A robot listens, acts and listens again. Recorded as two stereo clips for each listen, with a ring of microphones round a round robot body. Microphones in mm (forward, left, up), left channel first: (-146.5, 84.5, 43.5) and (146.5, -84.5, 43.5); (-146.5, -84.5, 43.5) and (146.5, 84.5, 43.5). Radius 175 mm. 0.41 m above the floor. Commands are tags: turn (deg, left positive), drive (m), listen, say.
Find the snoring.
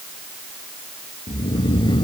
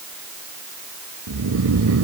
<turn deg="75"/>
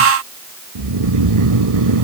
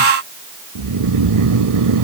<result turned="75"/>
<say>Found it: snoring, straight ahead.</say>